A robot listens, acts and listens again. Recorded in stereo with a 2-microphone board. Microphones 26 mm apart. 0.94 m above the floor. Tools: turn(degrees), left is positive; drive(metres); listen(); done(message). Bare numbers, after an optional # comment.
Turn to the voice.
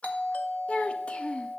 # The child speaking: about 50° left or 130° left.
turn(50)
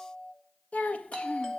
# So it is at 75° left.
turn(75)
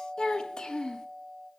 # The child speaking is now 35° left.
turn(35)
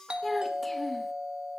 # The child speaking is now 10° left.
turn(10)
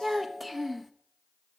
done("Found it: a child speaking, straight ahead, 1 to 2 m away.")